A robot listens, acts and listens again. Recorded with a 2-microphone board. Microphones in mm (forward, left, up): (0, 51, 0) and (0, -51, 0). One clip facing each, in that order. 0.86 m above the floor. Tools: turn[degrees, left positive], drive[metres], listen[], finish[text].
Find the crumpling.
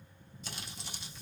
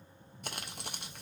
Thought: The crumpling: about 60° right or 120° right.
Action: turn[-60]
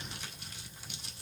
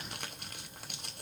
Thought: So it is at 60° right.
Action: turn[-60]
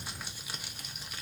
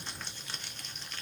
Thought: The crumpling is now 10° left.
Action: turn[10]
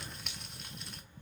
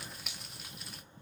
Action: finish[Facing the crumpling, under 1 m away.]